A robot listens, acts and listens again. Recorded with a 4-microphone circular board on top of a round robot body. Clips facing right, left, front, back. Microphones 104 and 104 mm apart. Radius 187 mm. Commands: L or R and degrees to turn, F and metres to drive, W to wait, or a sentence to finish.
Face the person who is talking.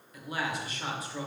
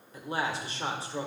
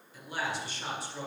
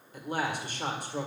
L150
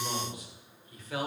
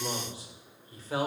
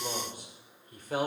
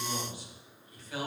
L35
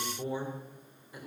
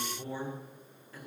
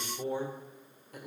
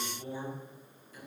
R20
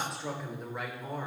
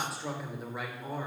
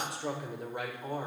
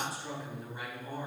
Found it: a man speaking, straight ahead.